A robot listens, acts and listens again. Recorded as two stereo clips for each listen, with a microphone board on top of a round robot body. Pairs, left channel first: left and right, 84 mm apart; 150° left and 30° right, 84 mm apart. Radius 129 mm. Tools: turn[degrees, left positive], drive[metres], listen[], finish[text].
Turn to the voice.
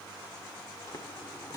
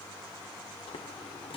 Action: listen[]
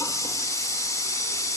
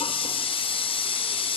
Action: listen[]
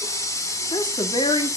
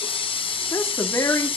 Thought: The woman speaking: 95° left.
Action: turn[95]
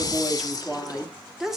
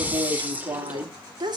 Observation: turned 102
Action: finish[Found it: a woman speaking, straight ahead, 2 to 4 m away.]